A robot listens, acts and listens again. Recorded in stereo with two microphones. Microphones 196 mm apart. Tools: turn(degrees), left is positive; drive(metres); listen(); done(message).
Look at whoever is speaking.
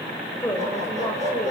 turn(degrees=30)
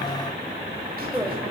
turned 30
turn(degrees=-10)
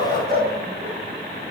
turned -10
listen()
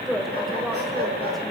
done("Facing the woman speaking, over 4 m away.")